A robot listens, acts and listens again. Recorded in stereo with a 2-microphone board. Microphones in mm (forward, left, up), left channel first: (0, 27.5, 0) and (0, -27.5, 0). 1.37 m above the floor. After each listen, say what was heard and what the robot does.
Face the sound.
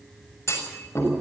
The clunk: about 55° left or 125° left. Turn 55° left.
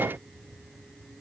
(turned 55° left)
Keep listening.
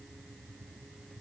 I heard a clunk, but can't make it out now. It was about straight ahead or 70° left.